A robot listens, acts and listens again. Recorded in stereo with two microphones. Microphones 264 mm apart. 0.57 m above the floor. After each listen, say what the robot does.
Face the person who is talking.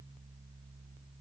Keep listening.
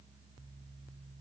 Keep listening.
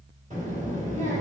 Turn 25° right.
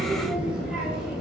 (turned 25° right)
Facing the child speaking.